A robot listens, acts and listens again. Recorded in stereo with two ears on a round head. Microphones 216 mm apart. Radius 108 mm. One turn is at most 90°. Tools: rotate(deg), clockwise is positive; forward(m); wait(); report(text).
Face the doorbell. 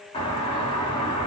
rotate(-20)
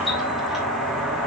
report("Found it: a doorbell, straight ahead, 2 to 4 m away.")